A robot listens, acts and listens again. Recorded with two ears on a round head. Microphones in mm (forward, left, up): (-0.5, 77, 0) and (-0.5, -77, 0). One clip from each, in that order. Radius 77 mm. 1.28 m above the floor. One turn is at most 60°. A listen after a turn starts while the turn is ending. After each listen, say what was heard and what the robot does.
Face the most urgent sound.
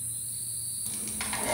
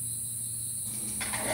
Keep listening.
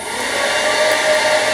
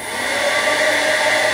Keep listening.
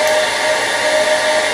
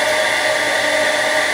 I can't make out anything urgent to turn to.